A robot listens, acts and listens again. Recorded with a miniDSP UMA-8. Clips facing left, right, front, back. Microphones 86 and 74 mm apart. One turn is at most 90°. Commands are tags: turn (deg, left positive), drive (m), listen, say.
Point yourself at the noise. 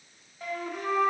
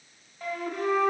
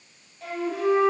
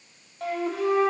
<turn deg="90"/>
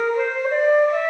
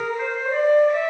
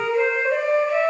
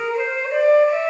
<turn deg="90"/>
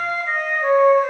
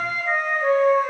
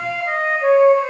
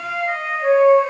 <say>Facing the flute, 1 to 2 m away.</say>